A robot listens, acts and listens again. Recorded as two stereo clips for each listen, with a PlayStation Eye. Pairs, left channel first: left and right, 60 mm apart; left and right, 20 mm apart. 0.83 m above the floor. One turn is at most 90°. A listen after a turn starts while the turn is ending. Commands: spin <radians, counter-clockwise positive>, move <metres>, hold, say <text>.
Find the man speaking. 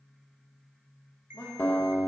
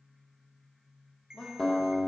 spin 1.22
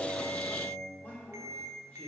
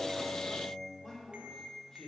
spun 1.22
spin 0.52
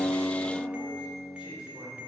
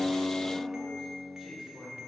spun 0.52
hold
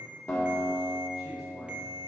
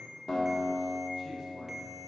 hold
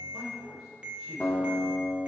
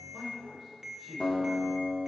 say Facing the man speaking, 2 to 4 m away.